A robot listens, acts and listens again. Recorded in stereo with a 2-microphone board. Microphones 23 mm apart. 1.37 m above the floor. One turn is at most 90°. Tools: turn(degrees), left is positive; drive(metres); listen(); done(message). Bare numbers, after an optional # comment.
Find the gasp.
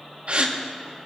# The gasp: about 45° right or 135° right.
turn(-45)
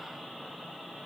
listen()
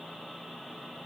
done("I heard a gasp, but can't make it out now. It was about straight ahead or 90° right.")